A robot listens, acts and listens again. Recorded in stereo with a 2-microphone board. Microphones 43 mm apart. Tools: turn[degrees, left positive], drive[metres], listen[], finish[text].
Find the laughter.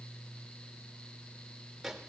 Action: listen[]
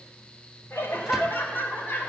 Thought: The laughter: about 60° left or 120° left.
Action: turn[60]
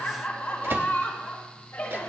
Thought: So it is at 50° left.
Action: turn[50]
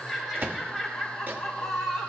Action: finish[Found it: laughter, straight ahead, 2 to 4 m away.]